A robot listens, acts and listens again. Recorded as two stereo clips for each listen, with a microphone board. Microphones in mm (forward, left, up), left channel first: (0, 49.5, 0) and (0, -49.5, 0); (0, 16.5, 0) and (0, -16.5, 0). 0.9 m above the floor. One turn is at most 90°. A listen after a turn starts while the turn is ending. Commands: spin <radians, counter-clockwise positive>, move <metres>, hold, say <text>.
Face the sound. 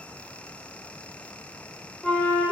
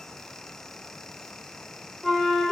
spin 0.52
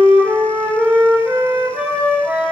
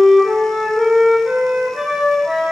spin -0.35
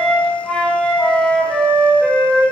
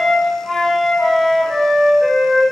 say Facing the flute.